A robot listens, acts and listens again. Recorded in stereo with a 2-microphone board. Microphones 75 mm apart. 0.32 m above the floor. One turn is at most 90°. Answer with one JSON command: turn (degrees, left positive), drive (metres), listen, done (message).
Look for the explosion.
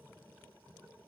{"listen": true}
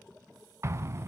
{"turn": -40}
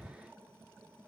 {"done": "Found it: an explosion, straight ahead."}